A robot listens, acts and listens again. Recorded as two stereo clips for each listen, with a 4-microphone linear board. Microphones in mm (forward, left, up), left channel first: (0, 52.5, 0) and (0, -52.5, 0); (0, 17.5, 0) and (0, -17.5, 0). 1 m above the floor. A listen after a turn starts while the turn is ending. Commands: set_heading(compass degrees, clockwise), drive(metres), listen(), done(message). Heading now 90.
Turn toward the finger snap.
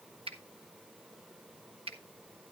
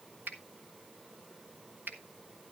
set_heading(155)
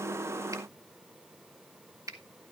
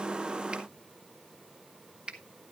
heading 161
set_heading(196)
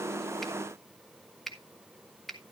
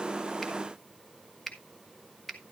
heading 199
done("Found it: a finger snap, straight ahead.")